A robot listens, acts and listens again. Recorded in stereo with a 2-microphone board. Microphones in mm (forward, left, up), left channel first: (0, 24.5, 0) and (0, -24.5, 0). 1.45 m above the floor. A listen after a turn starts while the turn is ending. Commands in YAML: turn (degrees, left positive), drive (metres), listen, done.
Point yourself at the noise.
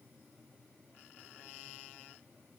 listen: true
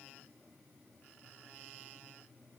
listen: true
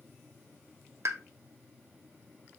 turn: -70
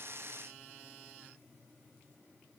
listen: true
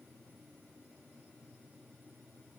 done: "I heard a pop, but can't make it out now. It was about straight ahead or 40° right."